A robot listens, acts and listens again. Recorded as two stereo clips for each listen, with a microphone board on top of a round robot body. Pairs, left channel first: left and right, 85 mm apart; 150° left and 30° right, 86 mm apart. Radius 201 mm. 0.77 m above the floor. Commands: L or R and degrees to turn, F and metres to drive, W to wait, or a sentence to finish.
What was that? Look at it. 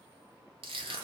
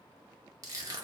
R80
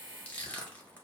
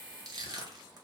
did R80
L15
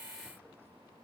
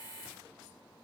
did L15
W
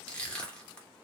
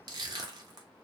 L10
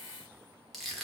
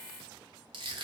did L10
Facing the crushing, 1 to 2 m away.